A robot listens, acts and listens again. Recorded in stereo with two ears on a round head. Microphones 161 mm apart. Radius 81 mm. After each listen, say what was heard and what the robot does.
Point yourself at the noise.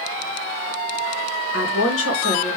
Turn 90° left.
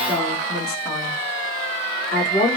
So it is at 25° left. Turn 25° left.
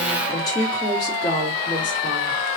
The woman speaking is now 25° left. Turn 25° left.
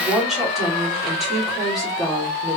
Facing the woman speaking, 2 to 4 m away.